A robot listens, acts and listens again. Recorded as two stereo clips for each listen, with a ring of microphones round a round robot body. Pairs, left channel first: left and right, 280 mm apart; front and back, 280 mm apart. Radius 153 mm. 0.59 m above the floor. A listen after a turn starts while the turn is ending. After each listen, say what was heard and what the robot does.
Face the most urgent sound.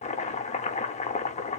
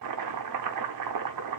Keep listening.
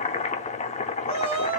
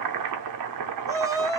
The shout: 105° right. Turn 105° right.
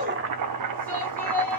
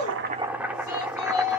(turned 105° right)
Found it: a shout, straight ahead, 1 to 2 m away.